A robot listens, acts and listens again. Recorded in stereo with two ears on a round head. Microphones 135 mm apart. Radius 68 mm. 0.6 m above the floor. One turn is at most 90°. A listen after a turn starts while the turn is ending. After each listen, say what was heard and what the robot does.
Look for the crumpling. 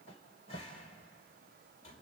Keep listening.
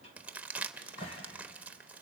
Turn 30° right.
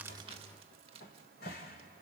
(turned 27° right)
So it is at 140° right. Turn 90° right.
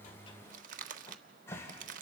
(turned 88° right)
The crumpling is now 55° right. Turn 55° right.
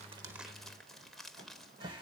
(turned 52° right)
Found it: crumpling, straight ahead.